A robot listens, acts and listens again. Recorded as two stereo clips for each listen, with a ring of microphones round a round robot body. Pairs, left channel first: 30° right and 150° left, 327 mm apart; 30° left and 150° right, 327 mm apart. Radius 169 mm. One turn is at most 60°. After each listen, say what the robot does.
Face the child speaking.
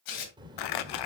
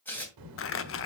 Turn 60° right.
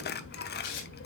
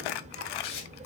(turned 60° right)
Turn 60° right.
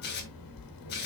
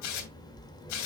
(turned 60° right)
Turn 50° right.
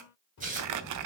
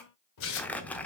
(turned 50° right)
Facing the child speaking.